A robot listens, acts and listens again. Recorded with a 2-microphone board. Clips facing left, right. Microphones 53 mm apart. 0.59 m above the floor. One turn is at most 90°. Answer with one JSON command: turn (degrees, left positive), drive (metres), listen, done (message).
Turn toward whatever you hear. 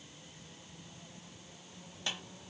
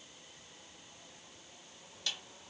{"turn": 30}
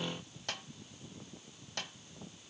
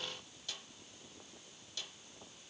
{"turn": 90}
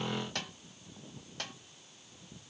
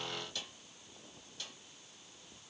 {"turn": 60}
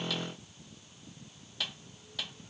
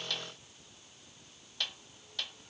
{"done": "Facing the snare drum, 1 to 2 m away."}